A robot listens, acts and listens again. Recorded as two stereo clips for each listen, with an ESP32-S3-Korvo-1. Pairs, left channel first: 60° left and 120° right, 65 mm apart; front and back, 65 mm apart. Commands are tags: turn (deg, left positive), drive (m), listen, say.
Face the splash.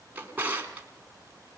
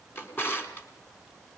<listen/>
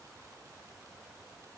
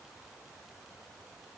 <listen/>
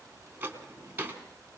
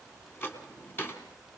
<say>I can't make out a splash, only a drawer.</say>